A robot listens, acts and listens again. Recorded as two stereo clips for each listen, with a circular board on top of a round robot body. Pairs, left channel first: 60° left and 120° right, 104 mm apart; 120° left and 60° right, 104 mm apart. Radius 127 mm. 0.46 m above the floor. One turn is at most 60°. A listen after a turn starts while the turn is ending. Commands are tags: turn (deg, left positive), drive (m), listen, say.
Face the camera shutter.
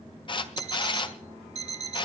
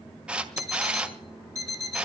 <turn deg="20"/>
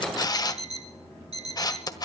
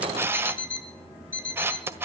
<say>Facing the camera shutter, 1 to 2 m away.</say>